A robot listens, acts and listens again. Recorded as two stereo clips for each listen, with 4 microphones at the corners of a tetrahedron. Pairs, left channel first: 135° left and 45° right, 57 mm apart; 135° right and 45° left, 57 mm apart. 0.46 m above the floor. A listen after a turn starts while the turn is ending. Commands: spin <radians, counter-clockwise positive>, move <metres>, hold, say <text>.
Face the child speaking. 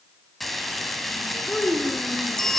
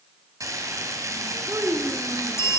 spin 1.13
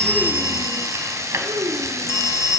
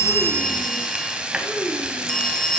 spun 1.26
spin -0.26
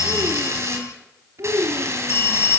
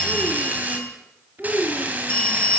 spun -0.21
spin -0.17
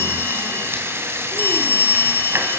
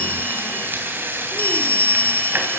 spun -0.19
hold
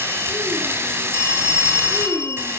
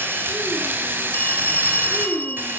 say Found it: a child speaking, straight ahead.